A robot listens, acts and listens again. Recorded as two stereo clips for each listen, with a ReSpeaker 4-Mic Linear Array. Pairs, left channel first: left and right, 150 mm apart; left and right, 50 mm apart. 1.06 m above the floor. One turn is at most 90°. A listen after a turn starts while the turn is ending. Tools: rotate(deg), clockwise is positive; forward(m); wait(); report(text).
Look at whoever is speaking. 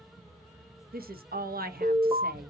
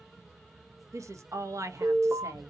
rotate(90)
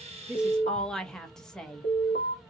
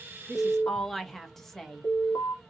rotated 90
report("Facing the woman speaking.")